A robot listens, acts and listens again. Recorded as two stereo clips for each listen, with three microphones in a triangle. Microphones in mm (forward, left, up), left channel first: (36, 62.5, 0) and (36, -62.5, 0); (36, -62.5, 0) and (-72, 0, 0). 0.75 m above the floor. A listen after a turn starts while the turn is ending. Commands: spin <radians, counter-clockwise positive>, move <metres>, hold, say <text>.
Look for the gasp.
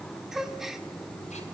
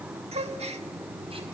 spin -3.05
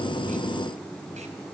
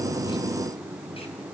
say I heard a gasp from this way, but can't make it out now.